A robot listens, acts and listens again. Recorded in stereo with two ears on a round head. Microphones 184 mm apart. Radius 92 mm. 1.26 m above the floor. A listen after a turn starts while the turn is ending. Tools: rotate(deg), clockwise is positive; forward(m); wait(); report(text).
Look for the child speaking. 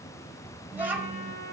rotate(30)
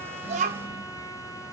wait()
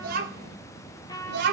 rotate(120)
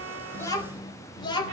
rotate(-25)
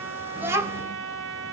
rotate(15)
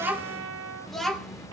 report("Found it: a child speaking, straight ahead, 2 to 4 m away.")